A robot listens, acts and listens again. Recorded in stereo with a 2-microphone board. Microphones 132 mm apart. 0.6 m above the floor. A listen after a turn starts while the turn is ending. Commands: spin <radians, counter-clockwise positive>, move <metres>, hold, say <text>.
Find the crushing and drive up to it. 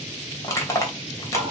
spin 0.44
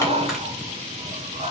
hold
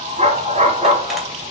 hold
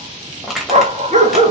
move 1.0
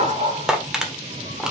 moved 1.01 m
move 1.0
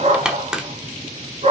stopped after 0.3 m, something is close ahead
say Arrived at the crushing, straight ahead.